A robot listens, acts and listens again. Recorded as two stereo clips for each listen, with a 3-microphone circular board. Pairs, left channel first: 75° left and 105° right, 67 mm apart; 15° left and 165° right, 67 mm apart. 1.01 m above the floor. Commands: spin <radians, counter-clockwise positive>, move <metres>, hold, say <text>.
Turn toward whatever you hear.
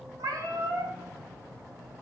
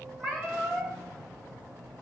spin -1.22
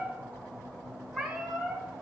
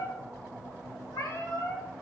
spin -0.35
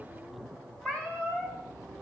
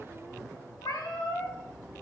say Found it: a cat meowing, straight ahead, 1 to 2 m away.